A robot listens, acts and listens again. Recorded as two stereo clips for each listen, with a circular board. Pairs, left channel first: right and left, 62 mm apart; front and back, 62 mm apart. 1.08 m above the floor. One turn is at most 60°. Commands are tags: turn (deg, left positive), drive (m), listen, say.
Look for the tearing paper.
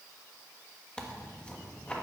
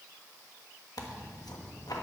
<turn deg="-15"/>
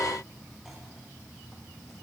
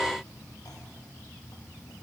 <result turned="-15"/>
<listen/>
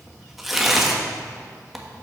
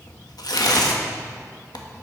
<say>Facing the tearing paper.</say>